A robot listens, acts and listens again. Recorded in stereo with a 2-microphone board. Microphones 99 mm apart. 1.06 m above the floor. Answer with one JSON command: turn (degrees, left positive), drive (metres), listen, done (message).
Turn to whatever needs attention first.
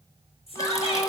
{"turn": 90}
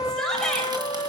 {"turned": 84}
{"done": "Facing the shout."}